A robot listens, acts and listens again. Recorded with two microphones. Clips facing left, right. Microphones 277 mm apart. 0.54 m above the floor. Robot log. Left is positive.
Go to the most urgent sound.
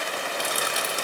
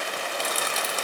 cmd idle
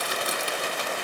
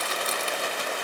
cmd idle
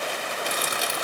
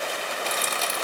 end: I can't make out anything urgent to turn to.